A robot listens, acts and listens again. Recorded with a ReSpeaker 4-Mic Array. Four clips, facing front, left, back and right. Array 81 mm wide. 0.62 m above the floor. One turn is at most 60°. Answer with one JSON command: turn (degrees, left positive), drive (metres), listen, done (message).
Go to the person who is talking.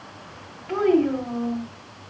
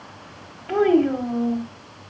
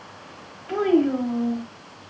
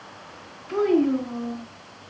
{"turn": 60}
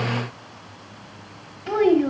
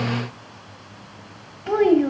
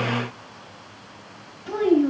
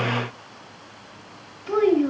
{"turn": 60}
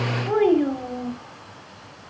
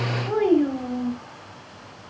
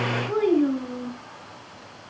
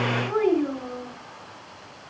{"turn": 15}
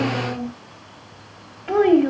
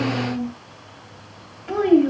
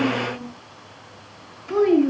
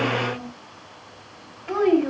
{"drive": 1.0}
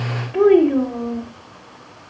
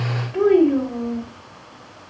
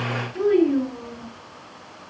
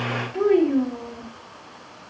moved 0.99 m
{"turn": 10}
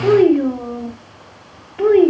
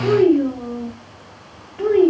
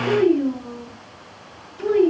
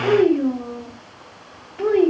{"drive": 1.0}
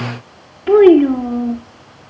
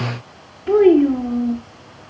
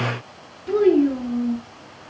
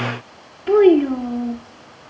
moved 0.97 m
{"drive": 1.0}
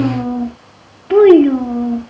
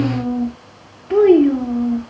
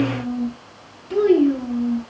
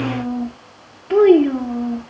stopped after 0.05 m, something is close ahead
{"done": "Arrived at the child speaking, straight ahead."}